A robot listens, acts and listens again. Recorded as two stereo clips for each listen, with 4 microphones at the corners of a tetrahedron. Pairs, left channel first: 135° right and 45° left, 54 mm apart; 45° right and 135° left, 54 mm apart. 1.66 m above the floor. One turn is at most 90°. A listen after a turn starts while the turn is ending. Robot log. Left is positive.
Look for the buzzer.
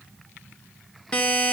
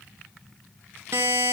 note: The buzzer: 160° left.
cmd yaw +90
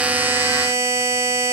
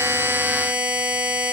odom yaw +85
note: The buzzer is now 75° left.
cmd yaw +75
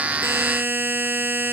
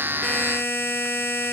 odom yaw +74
end: Facing the buzzer.